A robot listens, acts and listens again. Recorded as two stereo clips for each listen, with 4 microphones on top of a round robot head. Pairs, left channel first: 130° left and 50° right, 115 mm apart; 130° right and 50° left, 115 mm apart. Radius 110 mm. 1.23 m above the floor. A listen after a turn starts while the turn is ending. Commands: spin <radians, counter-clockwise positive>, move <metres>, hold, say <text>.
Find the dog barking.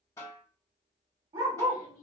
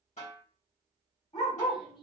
spin -1.75
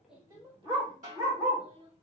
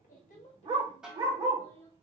say Found it: a dog barking, straight ahead.